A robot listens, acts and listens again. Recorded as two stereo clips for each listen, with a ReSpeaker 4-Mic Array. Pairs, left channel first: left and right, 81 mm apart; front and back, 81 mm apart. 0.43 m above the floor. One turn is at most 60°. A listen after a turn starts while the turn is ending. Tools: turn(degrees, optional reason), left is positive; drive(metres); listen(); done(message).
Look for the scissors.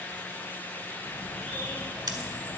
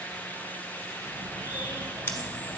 turn(degrees=-60, reason="The scissors: 60° right.")
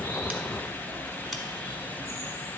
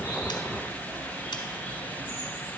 listen()
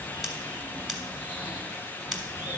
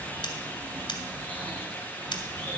done("Found it: scissors, straight ahead, 1 to 2 m away.")